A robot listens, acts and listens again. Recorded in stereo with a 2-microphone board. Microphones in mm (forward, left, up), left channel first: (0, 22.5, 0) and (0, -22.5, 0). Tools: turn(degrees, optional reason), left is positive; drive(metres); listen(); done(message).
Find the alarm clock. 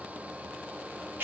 listen()
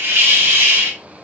listen()
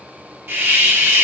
done("I can't make out an alarm clock to turn to.")